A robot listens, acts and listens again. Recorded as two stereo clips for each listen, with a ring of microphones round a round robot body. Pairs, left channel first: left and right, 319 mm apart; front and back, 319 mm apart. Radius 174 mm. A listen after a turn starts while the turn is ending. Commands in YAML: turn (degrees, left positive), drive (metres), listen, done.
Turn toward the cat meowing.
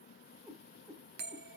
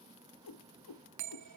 done: "Facing the cat meowing."